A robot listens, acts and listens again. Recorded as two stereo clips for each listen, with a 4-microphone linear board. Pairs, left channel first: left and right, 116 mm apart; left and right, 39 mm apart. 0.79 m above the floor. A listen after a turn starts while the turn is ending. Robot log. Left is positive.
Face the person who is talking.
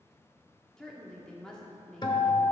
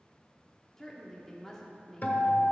cmd yaw +30
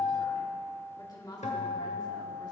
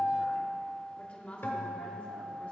note: So it is at 145° left.
cmd yaw +145
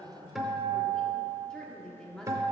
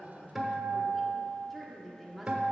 end: Facing the woman speaking, 1 to 2 m away.